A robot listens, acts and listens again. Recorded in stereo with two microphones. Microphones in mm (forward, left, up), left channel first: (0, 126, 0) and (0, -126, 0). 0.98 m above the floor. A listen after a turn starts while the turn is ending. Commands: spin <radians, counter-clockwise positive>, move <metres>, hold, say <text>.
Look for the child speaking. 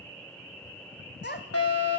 spin 0.79
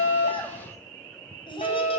spin 0.35
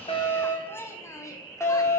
spin 0.17
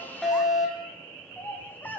say Found it: a child speaking, straight ahead.